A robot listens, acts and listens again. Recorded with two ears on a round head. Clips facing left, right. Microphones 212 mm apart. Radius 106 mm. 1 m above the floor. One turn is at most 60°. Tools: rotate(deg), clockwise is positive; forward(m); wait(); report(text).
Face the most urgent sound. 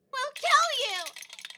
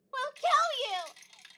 rotate(-35)
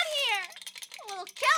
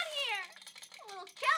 rotate(-60)
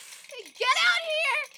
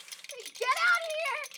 rotate(-50)
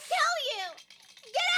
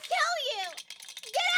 report("Facing the shout, under 1 m away.")